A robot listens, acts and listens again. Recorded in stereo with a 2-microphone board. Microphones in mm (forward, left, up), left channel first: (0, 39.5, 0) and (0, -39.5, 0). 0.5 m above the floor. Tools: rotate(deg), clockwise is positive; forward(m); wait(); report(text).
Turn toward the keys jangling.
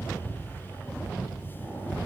wait()
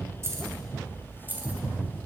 rotate(20)
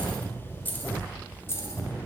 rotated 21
rotate(-35)
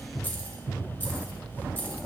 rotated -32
rotate(-25)
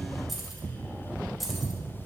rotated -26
report("Facing the keys jangling, 1 to 2 m away.")